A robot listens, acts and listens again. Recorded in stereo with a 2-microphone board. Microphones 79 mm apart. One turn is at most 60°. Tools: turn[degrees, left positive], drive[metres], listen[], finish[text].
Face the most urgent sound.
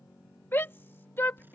Thought: The shout: about 30° left or 150° left.
Action: turn[30]
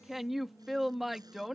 Action: finish[Facing the shout.]